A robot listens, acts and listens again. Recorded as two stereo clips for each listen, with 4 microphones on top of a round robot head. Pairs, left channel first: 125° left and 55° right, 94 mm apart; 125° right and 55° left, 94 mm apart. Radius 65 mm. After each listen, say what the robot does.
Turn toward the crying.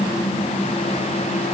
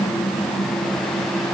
Keep listening.
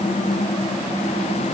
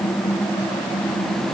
Keep listening.
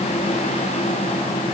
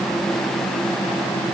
I can't make out crying.